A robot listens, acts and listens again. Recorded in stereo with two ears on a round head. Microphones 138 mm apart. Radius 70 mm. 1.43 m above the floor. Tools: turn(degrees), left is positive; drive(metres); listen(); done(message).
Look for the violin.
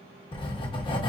listen()
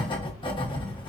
listen()
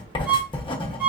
turn(degrees=-30)
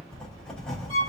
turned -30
turn(degrees=-140)
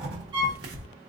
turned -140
turn(degrees=-30)
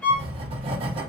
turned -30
turn(degrees=10)
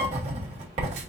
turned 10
listen()
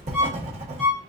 done("Found it: a violin, straight ahead.")